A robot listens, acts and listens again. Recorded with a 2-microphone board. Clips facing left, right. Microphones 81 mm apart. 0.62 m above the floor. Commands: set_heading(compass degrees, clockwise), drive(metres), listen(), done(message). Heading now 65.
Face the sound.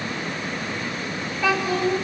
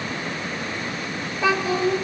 set_heading(90)
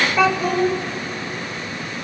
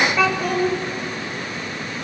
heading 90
done("Facing the child speaking.")